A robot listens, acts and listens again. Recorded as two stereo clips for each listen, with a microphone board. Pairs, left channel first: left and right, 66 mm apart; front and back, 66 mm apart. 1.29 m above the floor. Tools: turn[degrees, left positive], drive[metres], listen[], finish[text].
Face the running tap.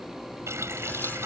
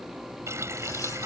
Thought: The running tap: 135° right.
Action: turn[-135]
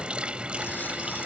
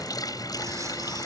Thought: The running tap is now 15° right.
Action: turn[-15]
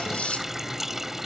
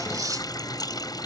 Action: finish[Found it: a running tap, straight ahead.]